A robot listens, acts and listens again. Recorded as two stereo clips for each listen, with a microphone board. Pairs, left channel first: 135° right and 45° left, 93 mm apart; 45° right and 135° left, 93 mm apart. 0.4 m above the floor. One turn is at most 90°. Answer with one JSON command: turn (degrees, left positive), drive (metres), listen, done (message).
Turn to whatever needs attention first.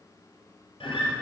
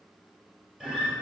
{"listen": true}
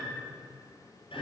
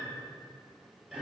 {"listen": true}
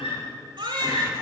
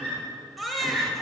{"turn": 45}
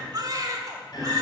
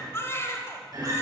{"turn": 10}
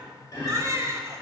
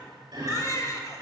{"done": "Found it: a baby crying, straight ahead, 1 to 2 m away."}